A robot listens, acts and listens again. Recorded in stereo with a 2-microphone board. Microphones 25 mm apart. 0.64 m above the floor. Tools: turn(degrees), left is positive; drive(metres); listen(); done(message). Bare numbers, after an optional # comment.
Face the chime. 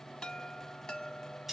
# The chime: about 40° left or 140° left.
turn(40)
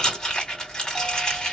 listen()
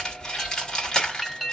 done("Facing the chime.")